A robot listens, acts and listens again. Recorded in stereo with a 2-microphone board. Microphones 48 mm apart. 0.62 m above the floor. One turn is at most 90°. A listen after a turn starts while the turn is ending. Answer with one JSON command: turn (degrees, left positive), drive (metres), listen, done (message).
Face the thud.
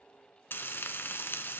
{"listen": true}
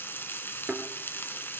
{"turn": -25}
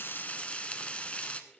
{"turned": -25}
{"listen": true}
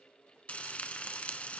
{"done": "I heard a thud, but can't make it out now. It was about straight ahead or 130° right."}